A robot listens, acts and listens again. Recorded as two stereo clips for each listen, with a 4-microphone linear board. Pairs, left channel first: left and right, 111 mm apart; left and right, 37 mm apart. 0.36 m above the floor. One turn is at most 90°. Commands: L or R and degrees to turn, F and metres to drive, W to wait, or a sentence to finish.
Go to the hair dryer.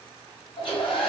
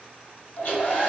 L55
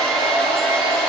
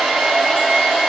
L10
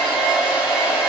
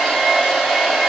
F1.0
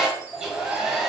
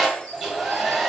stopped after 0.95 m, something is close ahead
I am next to the hair dryer.